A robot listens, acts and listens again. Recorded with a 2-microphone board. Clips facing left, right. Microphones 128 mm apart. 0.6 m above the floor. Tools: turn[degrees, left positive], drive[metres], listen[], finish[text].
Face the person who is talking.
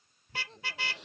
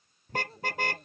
Action: turn[-30]
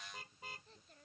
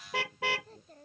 Thought: So it is at 140° right.
Action: turn[-140]
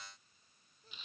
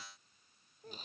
Thought: The child speaking is now 50° right.
Action: turn[-50]
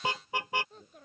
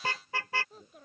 Action: finish[Facing the child speaking.]